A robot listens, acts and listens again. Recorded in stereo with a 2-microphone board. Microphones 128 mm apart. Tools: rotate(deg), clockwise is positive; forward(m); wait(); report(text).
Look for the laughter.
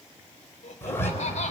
rotate(-65)
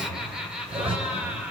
rotate(15)
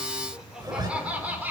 rotate(15)
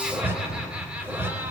wait()
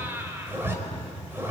rotate(20)
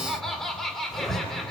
report("Facing the laughter, 2 to 4 m away.")